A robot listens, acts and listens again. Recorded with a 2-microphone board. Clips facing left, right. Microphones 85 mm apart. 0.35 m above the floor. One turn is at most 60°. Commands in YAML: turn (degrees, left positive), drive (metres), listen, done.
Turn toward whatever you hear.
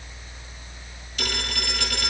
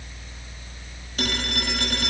turn: -40
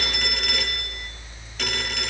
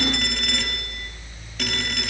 done: "Facing the phone ringing."